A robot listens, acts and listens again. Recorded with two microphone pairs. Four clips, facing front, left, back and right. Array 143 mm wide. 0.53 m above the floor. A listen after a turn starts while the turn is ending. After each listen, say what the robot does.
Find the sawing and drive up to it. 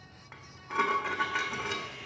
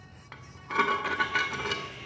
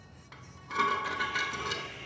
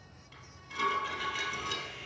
Turn 20° right.
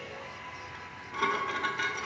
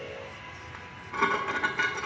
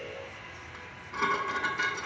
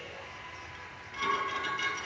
Drive 1.0 m forward.
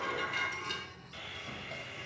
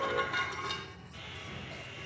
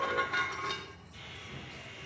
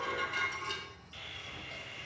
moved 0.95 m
Drive 1.0 m forward.
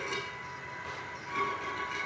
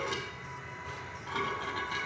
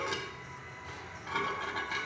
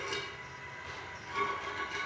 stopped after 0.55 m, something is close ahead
I am next to the sawing.